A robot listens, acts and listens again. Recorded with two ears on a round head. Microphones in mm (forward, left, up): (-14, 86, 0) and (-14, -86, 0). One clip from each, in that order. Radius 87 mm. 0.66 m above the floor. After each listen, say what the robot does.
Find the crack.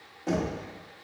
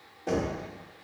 Keep listening.
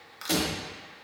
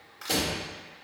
Turn 25° left.
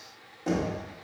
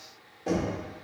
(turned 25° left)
Keep listening.
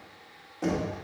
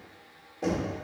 I heard a crack, but can't make it out now. It was about straight ahead or 130° left.